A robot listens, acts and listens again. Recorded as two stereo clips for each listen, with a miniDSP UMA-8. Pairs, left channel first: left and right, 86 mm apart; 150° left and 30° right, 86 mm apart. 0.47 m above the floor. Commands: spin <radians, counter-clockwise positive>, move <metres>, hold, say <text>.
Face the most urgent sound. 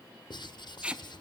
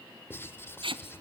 hold
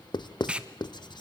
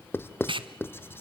hold
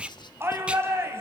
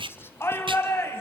spin -2.62
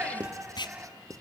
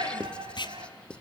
spin -0.26
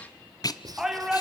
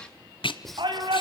say Found it: a shout, straight ahead, over 4 m away.